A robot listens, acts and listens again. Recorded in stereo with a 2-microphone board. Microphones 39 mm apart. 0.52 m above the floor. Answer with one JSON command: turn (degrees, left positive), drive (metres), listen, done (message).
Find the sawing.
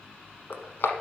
{"listen": true}
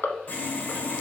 {"turn": 45}
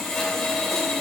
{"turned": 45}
{"turn": 15}
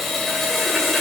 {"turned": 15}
{"done": "Facing the sawing."}